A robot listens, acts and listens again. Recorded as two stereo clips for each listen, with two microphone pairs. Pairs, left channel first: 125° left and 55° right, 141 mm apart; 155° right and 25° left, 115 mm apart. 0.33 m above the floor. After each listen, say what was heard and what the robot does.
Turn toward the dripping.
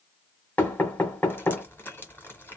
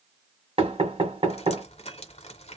The dripping: 160° right. Turn 160° right.
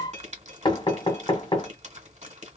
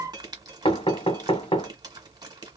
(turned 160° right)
The dripping is now 25° right. Turn 25° right.
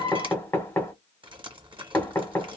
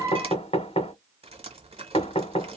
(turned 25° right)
Facing the dripping.